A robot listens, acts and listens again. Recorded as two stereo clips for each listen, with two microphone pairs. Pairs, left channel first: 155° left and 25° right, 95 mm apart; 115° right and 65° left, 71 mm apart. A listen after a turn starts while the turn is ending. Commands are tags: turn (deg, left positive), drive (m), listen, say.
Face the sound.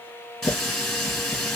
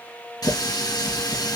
<turn deg="-115"/>
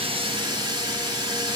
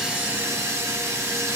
<turn deg="20"/>
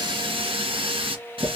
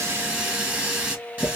<say>Facing the running tap, 2 to 4 m away.</say>